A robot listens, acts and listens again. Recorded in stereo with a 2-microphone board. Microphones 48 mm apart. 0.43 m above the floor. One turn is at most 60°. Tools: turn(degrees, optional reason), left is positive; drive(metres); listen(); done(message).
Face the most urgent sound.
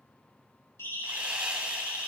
turn(degrees=60)
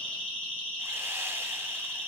turn(degrees=30, reason="So it is at 30° left.")
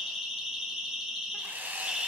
turn(degrees=-10, reason="The siren is now 10° right.")
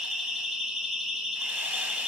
done("Found it: a siren, straight ahead.")